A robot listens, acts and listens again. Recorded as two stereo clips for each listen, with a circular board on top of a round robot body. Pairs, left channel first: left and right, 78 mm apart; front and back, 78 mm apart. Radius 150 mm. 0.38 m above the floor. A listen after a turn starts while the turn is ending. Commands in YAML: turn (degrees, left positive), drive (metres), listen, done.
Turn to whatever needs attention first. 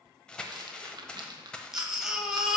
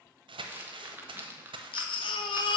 done: "Found it: a baby crying, straight ahead, 1 to 2 m away."